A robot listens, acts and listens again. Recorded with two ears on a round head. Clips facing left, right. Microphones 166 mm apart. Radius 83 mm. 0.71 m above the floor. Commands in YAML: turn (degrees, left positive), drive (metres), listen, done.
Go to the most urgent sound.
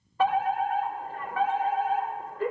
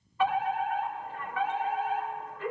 turn: 40
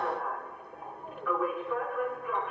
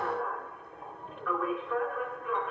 drive: 1.0
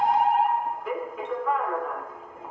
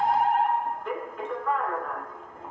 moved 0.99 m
drive: 1.0
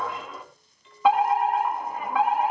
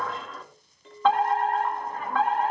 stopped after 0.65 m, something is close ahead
turn: 15
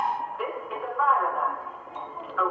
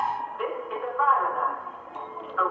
done: "I am next to the fire alarm."